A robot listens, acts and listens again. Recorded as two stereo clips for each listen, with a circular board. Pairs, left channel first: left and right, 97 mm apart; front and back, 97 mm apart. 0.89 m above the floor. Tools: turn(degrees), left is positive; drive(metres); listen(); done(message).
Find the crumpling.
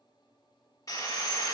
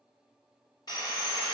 listen()
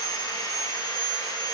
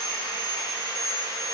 listen()
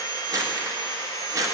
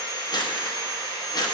turn(degrees=-40)
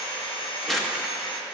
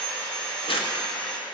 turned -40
done("Found it: crumpling, straight ahead.")